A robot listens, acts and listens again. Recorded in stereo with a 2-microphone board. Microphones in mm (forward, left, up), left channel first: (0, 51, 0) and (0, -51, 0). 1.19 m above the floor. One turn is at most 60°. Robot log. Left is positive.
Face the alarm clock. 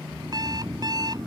note: The alarm clock: about 40° right or 140° right.
cmd yaw -40
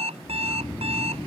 note: So it is at 100° right.
cmd yaw -60
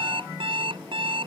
note: The alarm clock is now 60° right.
cmd yaw -60
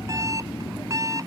note: The alarm clock is now 35° right.
cmd yaw -35
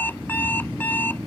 note: The alarm clock is now 20° left.
cmd yaw +20
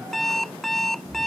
end: Found it: an alarm clock, straight ahead.